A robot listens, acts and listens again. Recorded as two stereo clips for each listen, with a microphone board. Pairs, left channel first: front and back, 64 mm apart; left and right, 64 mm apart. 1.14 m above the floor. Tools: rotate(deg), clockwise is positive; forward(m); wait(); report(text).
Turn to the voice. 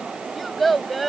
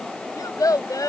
rotate(-90)
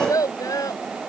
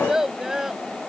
report("Facing the child speaking.")